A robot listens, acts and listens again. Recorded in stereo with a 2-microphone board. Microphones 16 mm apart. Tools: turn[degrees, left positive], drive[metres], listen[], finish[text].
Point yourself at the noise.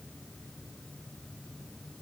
Action: listen[]
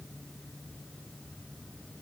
Action: listen[]
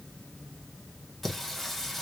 Action: turn[30]
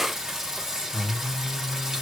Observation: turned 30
Thought: So it is at 25° right.
Action: turn[-25]
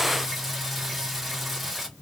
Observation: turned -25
Thought: The singing is now 15° right.
Action: turn[-15]
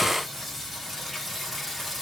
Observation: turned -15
Action: finish[Found it: singing, straight ahead.]